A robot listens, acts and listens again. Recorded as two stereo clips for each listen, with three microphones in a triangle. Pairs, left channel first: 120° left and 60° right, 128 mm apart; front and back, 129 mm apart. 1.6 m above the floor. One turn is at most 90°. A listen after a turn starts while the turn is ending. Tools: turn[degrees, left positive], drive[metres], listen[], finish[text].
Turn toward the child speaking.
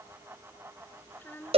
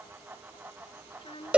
Thought: The child speaking: 45° left.
Action: turn[45]
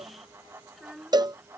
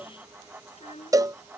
Thought: The child speaking is now 30° left.
Action: turn[30]
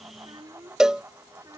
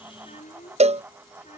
Action: finish[Found it: a child speaking, straight ahead.]